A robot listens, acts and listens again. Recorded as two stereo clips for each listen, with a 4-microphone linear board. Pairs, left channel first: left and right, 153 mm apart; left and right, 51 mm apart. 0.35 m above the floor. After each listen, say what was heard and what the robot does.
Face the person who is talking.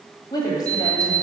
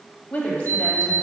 The woman speaking: about 25° left or 155° left. Turn 25° left.
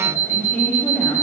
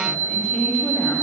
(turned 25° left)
Facing the woman speaking.